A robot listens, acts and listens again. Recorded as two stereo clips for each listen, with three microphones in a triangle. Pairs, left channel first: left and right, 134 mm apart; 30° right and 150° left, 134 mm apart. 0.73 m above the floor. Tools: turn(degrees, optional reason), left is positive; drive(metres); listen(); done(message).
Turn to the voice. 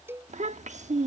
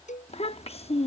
turn(degrees=-70, reason="The child speaking: 70° right.")
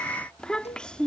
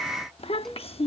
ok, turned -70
done("Found it: a child speaking, straight ahead.")